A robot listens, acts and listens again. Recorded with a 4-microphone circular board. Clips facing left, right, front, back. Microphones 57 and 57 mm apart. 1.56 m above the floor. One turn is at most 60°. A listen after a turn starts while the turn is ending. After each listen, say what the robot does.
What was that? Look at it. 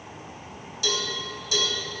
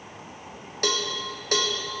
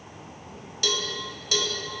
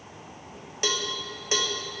Turn 60° right.
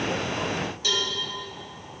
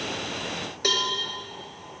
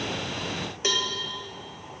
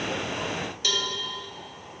Turn 60° right.
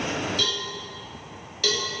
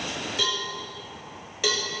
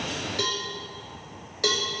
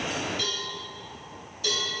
Turn 15° right.
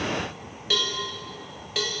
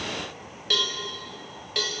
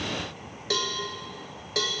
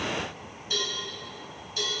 Facing the cowbell, 1 to 2 m away.